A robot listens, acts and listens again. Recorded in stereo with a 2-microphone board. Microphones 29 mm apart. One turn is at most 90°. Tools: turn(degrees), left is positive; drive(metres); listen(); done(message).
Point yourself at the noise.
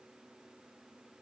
listen()
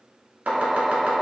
turn(degrees=-60)
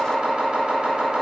turn(degrees=-45)
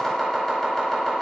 done("Facing the chopping.")